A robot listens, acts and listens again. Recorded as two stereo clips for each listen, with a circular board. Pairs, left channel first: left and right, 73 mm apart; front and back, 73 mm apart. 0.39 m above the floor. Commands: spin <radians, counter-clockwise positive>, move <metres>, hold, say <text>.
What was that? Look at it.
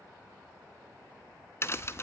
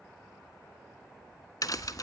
spin 0.61
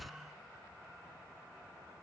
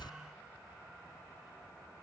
say Facing the crack, under 1 m away.